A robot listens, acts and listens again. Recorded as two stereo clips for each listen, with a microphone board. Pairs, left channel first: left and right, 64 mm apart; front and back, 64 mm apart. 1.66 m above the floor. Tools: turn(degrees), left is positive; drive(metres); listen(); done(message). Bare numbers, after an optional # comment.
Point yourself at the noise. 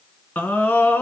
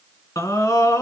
# The scream: 25° left.
turn(25)
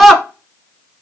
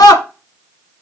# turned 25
done("Facing the scream.")